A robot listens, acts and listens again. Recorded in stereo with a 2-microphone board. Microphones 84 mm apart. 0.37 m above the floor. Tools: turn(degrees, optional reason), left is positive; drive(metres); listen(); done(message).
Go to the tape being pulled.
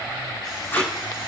turn(degrees=25, reason="The tape being pulled: about 25° left or 155° left.")
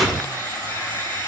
drive(metres=1.0)
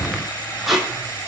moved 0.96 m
drive(metres=1.0)
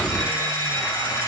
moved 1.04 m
listen()
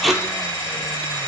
drive(metres=1.0)
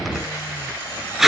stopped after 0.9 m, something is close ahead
done("I am next to the tape being pulled.")